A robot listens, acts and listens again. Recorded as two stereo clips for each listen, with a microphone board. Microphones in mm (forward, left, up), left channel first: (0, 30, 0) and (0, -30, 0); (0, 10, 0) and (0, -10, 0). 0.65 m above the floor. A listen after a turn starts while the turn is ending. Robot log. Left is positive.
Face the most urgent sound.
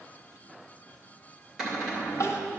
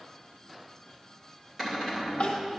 note: The crying: about 50° left or 130° left.
cmd yaw +50
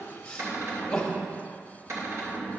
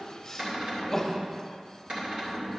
note: So it is at 10° left.
cmd yaw +10
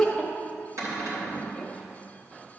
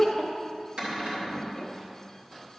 end: Facing the crying, 1 to 2 m away.